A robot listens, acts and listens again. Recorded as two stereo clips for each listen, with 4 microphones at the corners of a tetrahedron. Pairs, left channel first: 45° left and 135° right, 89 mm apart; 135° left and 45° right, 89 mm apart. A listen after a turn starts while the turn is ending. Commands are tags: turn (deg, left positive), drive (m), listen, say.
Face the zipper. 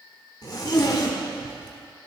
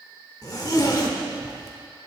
<turn deg="90"/>
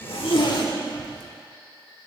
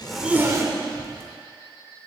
<turn deg="10"/>
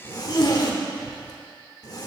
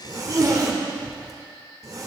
<say>Facing the zipper.</say>